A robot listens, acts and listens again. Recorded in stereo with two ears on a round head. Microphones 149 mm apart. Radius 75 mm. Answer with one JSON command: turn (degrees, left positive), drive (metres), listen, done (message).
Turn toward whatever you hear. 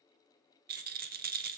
{"turn": -55}
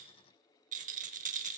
{"turn": -55}
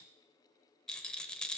{"done": "Facing the rattle."}